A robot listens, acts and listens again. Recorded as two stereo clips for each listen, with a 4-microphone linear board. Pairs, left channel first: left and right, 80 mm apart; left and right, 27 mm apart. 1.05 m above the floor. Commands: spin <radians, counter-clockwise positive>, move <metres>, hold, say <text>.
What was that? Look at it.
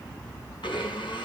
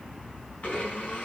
spin 1.57
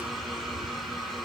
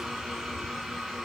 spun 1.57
say Found it: a blender, straight ahead.